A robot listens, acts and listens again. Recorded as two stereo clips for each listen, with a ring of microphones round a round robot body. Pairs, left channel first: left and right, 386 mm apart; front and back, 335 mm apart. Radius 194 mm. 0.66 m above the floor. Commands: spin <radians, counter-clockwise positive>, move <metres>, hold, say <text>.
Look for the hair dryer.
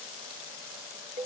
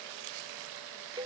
hold
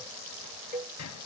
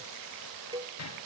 hold
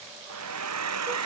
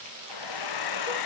spin -0.70
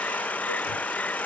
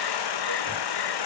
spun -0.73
say Found it: a hair dryer, straight ahead.